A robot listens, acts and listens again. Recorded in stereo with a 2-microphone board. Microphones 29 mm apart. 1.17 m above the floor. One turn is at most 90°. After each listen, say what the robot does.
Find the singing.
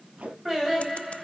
Turn 30° right.
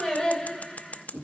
Turn 20° left.
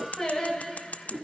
Turn 15° left.
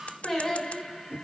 Found it: singing, straight ahead.